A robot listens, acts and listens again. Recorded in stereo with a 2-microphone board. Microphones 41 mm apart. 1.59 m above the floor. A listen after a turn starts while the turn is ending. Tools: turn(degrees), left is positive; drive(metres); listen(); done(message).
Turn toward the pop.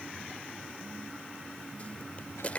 turn(degrees=35)
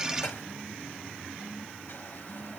listen()
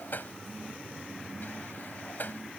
done("I heard a pop, but can't make it out now. It was about straight ahead or 110° left.")